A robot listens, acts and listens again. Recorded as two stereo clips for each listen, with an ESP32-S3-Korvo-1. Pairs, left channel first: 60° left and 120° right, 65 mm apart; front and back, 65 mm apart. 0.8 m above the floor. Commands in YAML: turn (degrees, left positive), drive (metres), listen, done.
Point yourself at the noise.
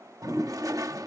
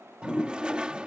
turn: -105
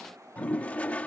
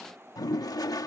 done: "Facing the toilet flushing."